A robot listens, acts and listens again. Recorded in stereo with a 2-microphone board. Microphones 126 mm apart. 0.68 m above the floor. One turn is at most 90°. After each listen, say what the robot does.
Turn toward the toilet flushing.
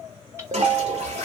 Turn 60° right.
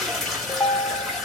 Facing the toilet flushing, 1 to 2 m away.